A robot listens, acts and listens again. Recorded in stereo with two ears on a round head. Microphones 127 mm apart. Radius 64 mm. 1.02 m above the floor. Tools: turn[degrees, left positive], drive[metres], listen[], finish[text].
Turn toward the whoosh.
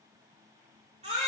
Action: listen[]
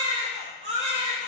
Action: listen[]
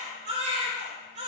Action: finish[I can't make out a whoosh to turn to.]